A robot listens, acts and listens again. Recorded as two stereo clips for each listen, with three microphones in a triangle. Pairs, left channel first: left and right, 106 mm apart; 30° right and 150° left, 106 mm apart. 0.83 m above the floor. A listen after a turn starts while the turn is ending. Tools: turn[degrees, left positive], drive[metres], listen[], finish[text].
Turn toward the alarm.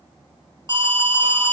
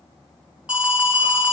Thought: The alarm: 135° right.
Action: turn[-135]
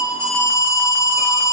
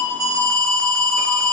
Thought: The alarm is now 30° left.
Action: turn[30]
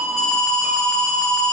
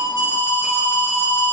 Action: finish[Facing the alarm, 2 to 4 m away.]